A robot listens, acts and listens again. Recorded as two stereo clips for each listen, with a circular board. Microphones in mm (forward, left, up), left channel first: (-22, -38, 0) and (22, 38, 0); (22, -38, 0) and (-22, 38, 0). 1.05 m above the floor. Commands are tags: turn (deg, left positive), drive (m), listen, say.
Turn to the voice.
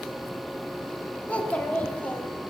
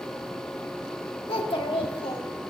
<turn deg="-45"/>
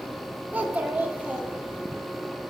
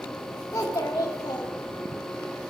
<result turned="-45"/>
<turn deg="-10"/>
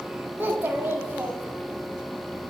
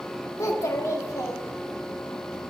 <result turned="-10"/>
<say>Found it: a child speaking, straight ahead, 1 to 2 m away.</say>